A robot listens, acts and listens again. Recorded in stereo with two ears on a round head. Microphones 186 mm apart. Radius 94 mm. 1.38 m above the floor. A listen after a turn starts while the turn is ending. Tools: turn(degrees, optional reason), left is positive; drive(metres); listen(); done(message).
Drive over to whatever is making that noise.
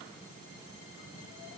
listen()
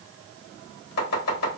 turn(degrees=90)
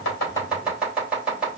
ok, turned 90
drive(metres=1.0)
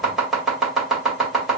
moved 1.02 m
drive(metres=1.0)
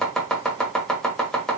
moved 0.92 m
drive(metres=1.0)
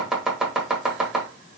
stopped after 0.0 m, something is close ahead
done("I am next to the chopping.")